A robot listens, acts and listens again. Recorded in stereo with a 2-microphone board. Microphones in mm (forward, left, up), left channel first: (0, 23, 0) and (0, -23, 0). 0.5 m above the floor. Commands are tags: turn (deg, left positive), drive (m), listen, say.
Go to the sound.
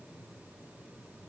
<listen/>
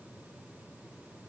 <listen/>
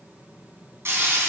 <turn deg="-65"/>
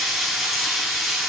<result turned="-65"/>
<drive m="1.0"/>
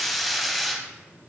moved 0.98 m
<drive m="1.0"/>
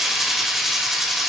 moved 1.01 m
<drive m="1.0"/>
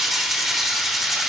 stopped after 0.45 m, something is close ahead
<say>I am next to the frying.</say>